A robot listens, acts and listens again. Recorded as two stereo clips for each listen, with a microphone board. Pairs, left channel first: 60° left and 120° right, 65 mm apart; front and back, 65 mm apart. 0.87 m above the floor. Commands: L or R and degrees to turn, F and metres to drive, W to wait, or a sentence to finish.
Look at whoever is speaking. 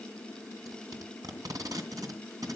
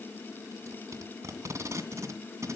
W
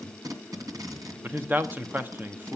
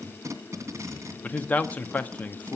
R65
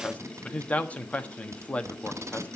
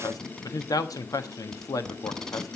Found it: a man speaking, straight ahead, 1 to 2 m away.